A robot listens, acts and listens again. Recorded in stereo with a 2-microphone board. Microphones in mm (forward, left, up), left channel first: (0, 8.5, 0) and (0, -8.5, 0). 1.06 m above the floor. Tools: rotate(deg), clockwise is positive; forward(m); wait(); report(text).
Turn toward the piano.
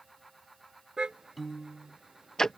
rotate(-30)
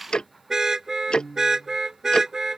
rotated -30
rotate(-150)
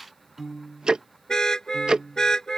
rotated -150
rotate(30)
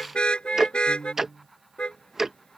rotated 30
rotate(-10)
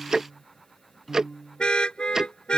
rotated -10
report("Found it: a piano, straight ahead.")